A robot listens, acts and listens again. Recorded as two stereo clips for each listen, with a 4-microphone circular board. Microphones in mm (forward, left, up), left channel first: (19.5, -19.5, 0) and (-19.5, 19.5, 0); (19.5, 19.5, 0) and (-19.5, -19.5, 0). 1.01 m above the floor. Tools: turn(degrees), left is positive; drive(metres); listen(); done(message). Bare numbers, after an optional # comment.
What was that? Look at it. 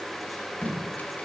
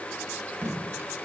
# The tape being pulled: 100° right.
turn(-100)
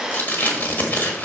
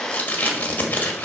done("Found it: tape being pulled, straight ahead, 1 to 2 m away.")